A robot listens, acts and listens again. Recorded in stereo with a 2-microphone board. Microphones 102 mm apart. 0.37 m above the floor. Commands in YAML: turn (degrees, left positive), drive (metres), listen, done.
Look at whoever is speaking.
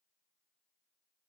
listen: true
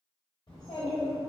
turn: 55
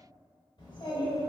turn: 55
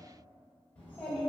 turn: 15
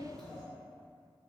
done: "Facing the child speaking, under 1 m away."